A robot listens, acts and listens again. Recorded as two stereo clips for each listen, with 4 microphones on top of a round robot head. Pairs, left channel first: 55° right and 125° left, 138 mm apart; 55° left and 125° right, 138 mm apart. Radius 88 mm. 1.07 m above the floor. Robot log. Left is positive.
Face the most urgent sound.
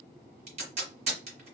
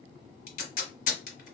cmd idle
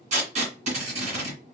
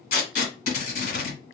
cmd idle
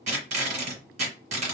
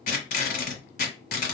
end: I can't make out anything urgent, only tape being pulled.